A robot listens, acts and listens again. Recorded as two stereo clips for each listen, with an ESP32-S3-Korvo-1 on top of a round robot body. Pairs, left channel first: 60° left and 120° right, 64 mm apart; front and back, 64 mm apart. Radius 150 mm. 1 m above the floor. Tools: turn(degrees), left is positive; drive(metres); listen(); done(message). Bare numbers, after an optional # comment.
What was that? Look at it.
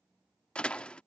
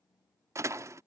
# The door slam: 135° left.
turn(135)
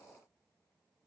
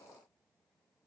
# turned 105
# Nothing new. It was at 30° left.
turn(30)
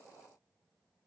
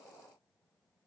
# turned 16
# Nothing new. It was at 15° left.
turn(15)
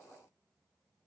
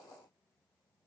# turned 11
done("I heard a door slam from this way, but can't make it out now.")